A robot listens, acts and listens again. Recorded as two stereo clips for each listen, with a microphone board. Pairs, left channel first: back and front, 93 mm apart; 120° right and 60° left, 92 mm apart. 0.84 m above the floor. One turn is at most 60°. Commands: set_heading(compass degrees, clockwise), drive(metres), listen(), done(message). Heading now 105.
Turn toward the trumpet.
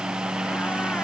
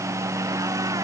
listen()
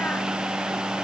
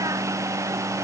listen()
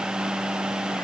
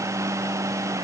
done("I can't make out a trumpet to turn to.")